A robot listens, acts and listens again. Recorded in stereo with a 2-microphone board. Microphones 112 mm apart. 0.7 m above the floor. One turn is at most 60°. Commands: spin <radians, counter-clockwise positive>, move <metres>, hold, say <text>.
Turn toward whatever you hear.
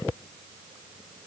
hold
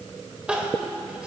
spin -0.52
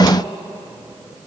hold
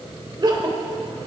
spin -1.05
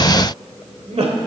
spin -1.05
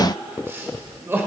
spin -0.35
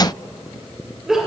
say Facing the crying, 1 to 2 m away.